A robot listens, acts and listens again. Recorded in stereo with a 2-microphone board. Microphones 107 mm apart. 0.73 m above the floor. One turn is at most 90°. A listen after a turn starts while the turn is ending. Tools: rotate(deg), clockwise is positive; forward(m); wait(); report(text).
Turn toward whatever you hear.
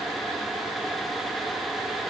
wait()
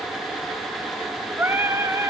rotate(25)
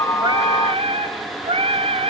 rotate(90)
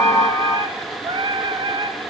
rotate(45)
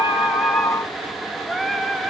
report("Facing the singing.")